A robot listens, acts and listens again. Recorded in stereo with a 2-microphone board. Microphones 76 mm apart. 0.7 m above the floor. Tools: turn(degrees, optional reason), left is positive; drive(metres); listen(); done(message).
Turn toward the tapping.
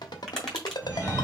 turn(degrees=30)
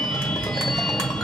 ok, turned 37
listen()
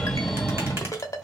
listen()
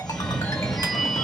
done("I heard tapping, but can't make it out now. It was about 35° right or 140° left.")